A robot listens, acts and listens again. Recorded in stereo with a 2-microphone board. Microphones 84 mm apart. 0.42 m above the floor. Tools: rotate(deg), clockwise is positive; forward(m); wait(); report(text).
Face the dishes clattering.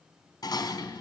rotate(-50)
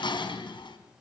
rotate(-75)
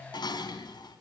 rotate(-60)
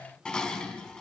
rotate(-10)
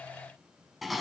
report("Facing the dishes clattering, 2 to 4 m away.")